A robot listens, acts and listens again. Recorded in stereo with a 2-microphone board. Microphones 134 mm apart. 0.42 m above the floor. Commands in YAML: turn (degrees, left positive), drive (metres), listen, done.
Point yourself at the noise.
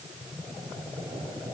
listen: true
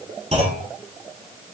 turn: -55
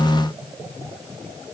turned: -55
listen: true
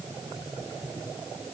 done: "I heard a clunk, but can't make it out now. It was about straight ahead or 70° right."